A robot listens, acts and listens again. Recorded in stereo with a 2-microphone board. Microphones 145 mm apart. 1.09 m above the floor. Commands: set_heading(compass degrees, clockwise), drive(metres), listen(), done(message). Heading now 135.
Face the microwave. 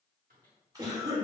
set_heading(225)
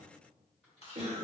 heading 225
listen()
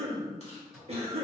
done("Facing the microwave, 1 to 2 m away.")